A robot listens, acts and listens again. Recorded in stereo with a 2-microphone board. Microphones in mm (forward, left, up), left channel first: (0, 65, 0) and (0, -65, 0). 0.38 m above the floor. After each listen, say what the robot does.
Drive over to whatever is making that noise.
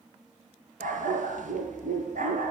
Turn 90° right.
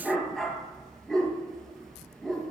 Drive 1.0 m forward.
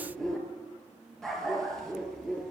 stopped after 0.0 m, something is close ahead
Something is in my way. I am facing the dog barking but have not reached it.